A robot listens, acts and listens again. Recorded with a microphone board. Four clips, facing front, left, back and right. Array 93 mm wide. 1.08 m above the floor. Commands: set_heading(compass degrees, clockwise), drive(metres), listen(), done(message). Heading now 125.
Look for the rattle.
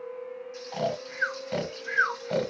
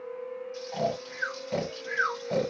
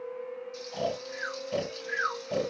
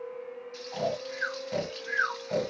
listen()
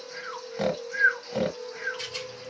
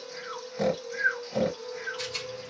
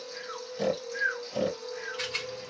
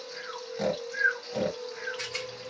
set_heading(275)
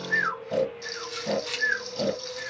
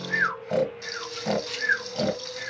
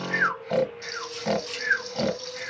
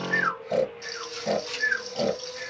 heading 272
done("Found it: a rattle, straight ahead.")